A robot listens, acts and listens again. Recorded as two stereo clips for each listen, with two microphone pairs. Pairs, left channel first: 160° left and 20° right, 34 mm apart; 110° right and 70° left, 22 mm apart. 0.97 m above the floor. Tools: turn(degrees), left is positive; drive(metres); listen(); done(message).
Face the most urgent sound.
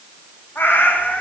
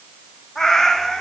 listen()
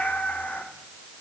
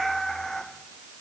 listen()
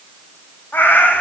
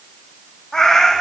done("I can't make out anything urgent, only a cat meowing.")